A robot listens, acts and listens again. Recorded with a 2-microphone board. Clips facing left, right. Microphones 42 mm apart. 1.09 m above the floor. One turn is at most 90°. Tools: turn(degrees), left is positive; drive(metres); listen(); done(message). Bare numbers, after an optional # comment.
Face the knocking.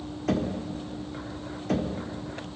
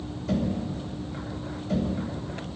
# The knocking: about 65° left or 115° left.
turn(65)
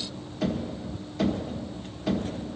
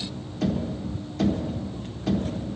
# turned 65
done("Found it: knocking, straight ahead.")